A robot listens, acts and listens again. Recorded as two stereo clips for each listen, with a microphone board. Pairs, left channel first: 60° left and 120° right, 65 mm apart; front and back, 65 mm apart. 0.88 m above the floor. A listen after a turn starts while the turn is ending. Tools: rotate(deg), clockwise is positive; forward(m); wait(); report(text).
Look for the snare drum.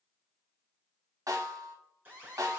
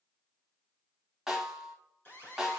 rotate(95)
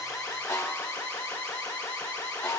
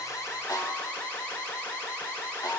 rotate(-25)
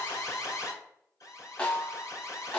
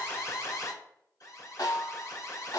rotate(10)
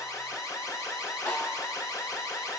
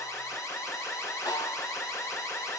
report("Found it: a snare drum, straight ahead, 1 to 2 m away.")